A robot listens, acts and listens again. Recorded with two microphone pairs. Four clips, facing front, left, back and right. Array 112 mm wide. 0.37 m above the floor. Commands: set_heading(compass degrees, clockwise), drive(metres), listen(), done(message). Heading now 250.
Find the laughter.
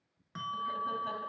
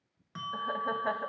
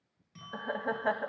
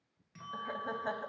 set_heading(90)
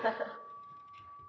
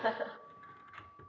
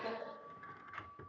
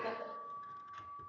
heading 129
set_heading(89)
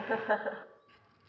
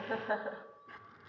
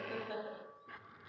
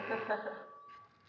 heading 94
done("Facing the laughter, 2 to 4 m away.")